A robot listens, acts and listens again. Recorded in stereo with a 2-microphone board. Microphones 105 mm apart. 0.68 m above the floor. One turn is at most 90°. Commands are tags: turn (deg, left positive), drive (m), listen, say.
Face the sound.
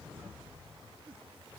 <listen/>
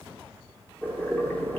<turn deg="20"/>
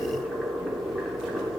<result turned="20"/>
<say>Found it: boiling, straight ahead, under 1 m away.</say>